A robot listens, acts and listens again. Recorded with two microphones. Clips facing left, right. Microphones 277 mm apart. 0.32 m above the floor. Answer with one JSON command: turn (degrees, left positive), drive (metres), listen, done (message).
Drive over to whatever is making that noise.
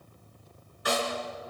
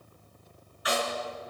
{"turn": 50}
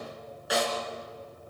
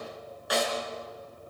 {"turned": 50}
{"drive": 1.0}
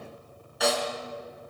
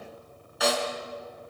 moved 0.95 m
{"drive": 1.0}
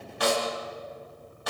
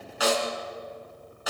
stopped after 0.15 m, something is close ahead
{"done": "Something is in my way. I am facing the snare drum but have not reached it."}